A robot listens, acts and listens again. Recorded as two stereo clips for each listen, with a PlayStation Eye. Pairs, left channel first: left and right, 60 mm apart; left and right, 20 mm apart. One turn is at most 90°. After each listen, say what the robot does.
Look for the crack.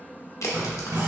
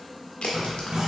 Turn 65° left.
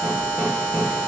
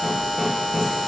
Keep listening.
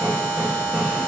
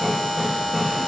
I heard a crack, but can't make it out now. It was about straight ahead or 50° left.